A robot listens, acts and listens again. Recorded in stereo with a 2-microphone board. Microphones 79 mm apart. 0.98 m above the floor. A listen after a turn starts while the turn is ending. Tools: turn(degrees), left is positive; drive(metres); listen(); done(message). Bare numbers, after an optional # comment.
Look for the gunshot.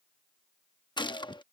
# The gunshot: about 75° left or 105° left.
turn(75)
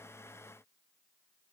listen()
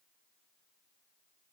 done("I heard a gunshot, but can't make it out now. It was about straight ahead or 30° left.")